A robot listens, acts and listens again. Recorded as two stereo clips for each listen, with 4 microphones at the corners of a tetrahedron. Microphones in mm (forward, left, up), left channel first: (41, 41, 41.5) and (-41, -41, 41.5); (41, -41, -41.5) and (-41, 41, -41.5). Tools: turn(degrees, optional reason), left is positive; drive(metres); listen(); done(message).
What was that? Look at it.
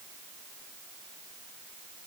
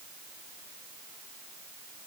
listen()
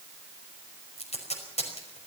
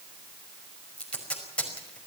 turn(degrees=35, reason="The tape being pulled: 35° left.")
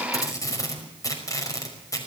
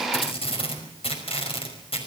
turn(degrees=-15, reason="The tape being pulled is now 15° right.")
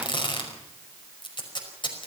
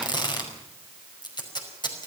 done("Facing the tape being pulled, over 4 m away.")